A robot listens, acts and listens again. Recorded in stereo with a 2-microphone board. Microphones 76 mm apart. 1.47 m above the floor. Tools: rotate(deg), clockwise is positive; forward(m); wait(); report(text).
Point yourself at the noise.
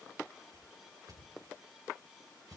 rotate(65)
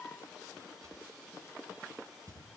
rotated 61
rotate(50)
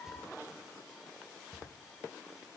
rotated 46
report("Facing the whoosh.")